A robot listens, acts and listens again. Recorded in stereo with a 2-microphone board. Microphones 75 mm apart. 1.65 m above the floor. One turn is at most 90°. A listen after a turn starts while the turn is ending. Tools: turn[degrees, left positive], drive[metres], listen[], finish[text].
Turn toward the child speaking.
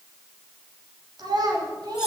Thought: The child speaking: about 70° right or 110° right.
Action: turn[-70]
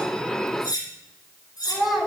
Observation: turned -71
Action: finish[Found it: a child speaking, straight ahead, 2 to 4 m away.]